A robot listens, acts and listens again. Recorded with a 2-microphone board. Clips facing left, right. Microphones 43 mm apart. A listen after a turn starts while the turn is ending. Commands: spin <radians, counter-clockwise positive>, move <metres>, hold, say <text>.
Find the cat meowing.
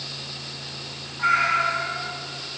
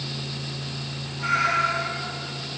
spin 0.61
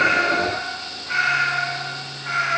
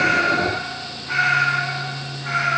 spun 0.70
say Facing the cat meowing, over 4 m away.